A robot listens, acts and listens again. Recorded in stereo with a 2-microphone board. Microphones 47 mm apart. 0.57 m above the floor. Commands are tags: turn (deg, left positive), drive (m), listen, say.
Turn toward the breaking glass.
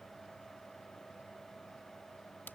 <listen/>
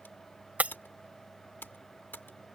<turn deg="-35"/>
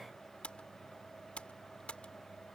<listen/>
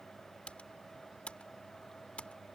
<say>I heard breaking glass, but can't make it out now. It was about straight ahead or 110° right.</say>